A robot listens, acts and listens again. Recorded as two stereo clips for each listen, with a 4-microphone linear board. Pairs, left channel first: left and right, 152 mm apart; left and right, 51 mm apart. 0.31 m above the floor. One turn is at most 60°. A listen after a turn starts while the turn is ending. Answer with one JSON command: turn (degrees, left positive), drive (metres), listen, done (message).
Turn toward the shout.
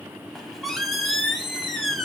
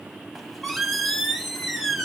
{"listen": true}
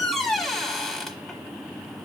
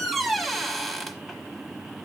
{"listen": true}
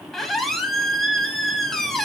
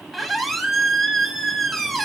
{"done": "I can't make out a shout to turn to."}